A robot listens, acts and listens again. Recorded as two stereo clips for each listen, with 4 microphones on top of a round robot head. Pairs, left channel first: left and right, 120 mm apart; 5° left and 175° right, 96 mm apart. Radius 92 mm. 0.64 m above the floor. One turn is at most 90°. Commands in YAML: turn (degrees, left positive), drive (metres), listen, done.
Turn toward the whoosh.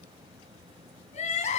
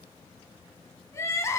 listen: true
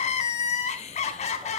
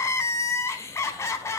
listen: true
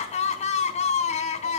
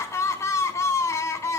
done: "I can't make out a whoosh, only crying."